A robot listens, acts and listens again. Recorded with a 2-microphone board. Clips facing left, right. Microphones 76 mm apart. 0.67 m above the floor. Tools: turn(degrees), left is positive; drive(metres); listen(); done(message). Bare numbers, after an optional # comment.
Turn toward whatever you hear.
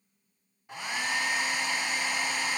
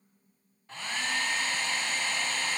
turn(30)
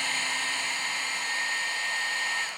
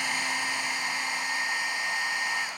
# So it is at 15° right.
turn(-15)
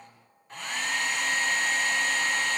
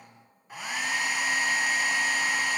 # The hair dryer is now 10° right.
turn(-10)
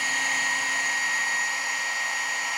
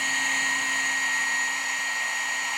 done("Facing the hair dryer, under 1 m away.")